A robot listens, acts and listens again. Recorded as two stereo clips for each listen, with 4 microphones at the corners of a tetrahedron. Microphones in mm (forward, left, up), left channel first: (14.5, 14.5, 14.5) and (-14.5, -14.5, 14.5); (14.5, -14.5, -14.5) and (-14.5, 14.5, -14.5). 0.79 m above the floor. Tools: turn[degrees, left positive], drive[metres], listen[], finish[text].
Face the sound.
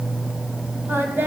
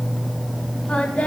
Thought: The singing: 105° right.
Action: turn[-105]
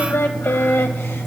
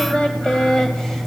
Thought: The singing is now 30° left.
Action: turn[30]
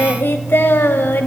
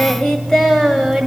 Thought: The singing is now 40° left.
Action: turn[40]
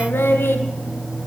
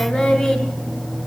Thought: The singing is now 20° left.
Action: turn[20]
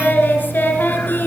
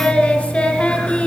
Thought: The singing is now 10° left.
Action: turn[10]
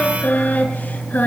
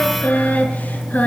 Action: finish[Facing the singing.]